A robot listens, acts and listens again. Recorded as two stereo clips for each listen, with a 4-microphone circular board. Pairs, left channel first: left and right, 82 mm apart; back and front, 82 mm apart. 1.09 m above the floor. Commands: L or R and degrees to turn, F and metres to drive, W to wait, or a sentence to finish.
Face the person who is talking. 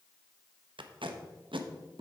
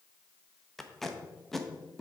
W
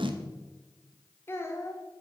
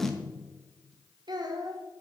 L35
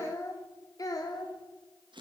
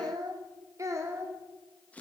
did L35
L55
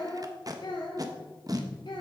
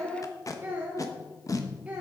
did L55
L75
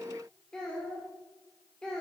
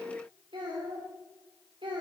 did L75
Facing the child speaking.